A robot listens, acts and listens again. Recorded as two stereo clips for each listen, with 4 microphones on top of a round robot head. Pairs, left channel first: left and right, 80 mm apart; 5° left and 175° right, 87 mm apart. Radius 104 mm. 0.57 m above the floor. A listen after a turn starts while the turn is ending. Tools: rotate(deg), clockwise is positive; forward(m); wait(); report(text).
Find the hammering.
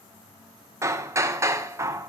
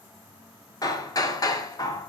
rotate(40)
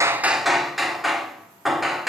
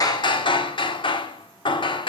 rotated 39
report("Facing the hammering.")